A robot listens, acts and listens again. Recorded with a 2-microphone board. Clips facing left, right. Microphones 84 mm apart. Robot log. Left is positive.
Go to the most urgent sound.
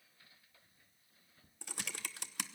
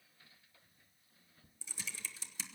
cmd idle
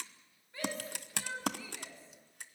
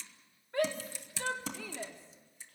cmd yaw -90
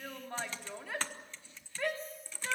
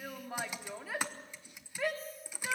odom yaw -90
cmd fwd 1.0
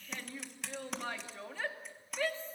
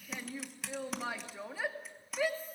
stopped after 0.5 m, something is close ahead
note: The shout is now 10° right.
cmd yaw -10
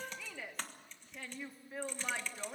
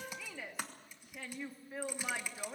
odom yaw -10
end: Something is in my way. I am facing the shout but have not reached it.